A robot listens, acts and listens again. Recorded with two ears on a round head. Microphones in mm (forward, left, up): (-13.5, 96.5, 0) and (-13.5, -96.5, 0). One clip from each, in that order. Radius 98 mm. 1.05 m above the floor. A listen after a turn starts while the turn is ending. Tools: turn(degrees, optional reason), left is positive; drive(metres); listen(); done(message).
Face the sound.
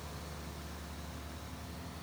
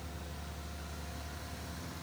listen()
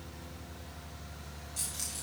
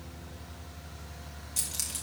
turn(degrees=-30, reason="The keys jangling: about 30° right or 150° right.")
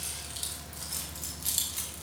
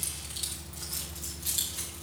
turn(degrees=20, reason="So it is at 20° left.")
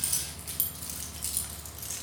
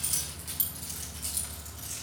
turn(degrees=20, reason="The keys jangling is now 20° left.")
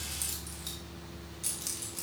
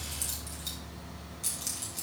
done("Found it: keys jangling, straight ahead, 1 to 2 m away.")